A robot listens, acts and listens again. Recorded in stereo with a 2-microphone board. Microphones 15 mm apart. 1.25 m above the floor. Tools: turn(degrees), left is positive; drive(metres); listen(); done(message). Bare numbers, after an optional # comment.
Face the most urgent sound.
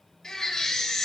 # The baby crying: about 60° left or 120° left.
turn(60)
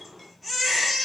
done("Found it: a baby crying, straight ahead, 2 to 4 m away.")